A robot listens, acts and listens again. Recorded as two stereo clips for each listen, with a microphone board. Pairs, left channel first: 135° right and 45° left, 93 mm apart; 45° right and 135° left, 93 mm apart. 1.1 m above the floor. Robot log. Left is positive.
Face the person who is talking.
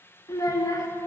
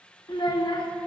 note: The child speaking: 80° right.
cmd yaw -80
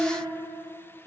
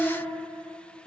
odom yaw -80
note: The child speaking is now 10° left.
cmd yaw +10
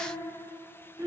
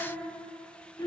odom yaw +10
end: Facing the child speaking.